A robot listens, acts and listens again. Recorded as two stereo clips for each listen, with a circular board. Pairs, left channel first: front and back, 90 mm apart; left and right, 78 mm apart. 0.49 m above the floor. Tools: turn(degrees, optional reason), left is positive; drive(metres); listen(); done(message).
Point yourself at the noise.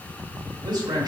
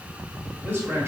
turn(degrees=-145, reason="The man speaking: 145° right.")
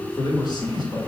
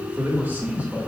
turn(degrees=-20, reason="The man speaking is now 20° right.")
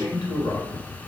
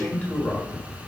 turn(degrees=25, reason="The man speaking is now 25° left.")
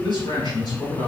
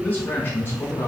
turn(degrees=35, reason="The man speaking is now 35° left.")
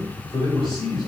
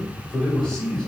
turn(degrees=15, reason="The man speaking is now 15° left.")
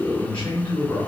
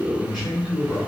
done("Found it: a man speaking, straight ahead.")